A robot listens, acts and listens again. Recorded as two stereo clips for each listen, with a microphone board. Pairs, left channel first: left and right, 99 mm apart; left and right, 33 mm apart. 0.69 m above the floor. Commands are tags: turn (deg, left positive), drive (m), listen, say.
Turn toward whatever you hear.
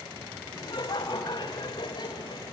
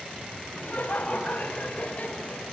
<turn deg="50"/>
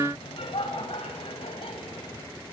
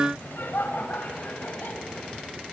<turn deg="75"/>
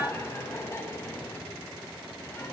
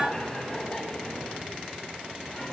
<turn deg="25"/>
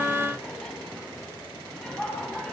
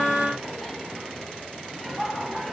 <say>Facing the laughter, over 4 m away.</say>